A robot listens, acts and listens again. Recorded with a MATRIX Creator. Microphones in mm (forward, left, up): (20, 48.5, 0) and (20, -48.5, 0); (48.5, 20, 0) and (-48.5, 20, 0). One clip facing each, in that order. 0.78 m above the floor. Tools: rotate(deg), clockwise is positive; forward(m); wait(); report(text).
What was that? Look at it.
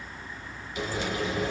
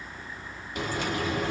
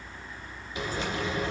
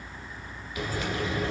rotate(60)
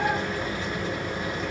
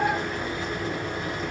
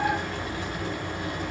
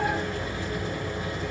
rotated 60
report("Found it: frying, straight ahead, 1 to 2 m away.")